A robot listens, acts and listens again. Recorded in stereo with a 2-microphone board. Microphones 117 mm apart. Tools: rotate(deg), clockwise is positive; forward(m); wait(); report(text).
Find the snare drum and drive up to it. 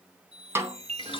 rotate(20)
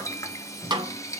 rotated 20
rotate(135)
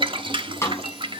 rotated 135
rotate(-25)
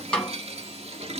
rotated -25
rotate(-10)
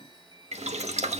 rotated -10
wait()
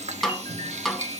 forward(1.0)
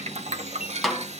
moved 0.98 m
forward(1.0)
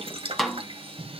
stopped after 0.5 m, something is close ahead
report("I am next to the snare drum.")